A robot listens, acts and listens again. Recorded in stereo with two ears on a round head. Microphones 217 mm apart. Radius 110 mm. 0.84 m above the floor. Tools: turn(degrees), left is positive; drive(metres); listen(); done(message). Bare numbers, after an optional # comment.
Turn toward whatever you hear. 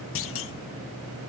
# The clunk: about 60° left or 120° left.
turn(60)
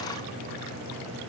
listen()
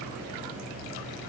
done("I heard a clunk, but can't make it out now. It was about straight ahead or 60° left.")